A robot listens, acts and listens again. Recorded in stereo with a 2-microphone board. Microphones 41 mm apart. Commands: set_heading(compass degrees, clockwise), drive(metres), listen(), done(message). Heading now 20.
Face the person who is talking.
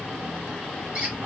listen()
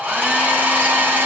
listen()
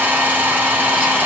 done("I can't make out anyone speaking, only a hair dryer.")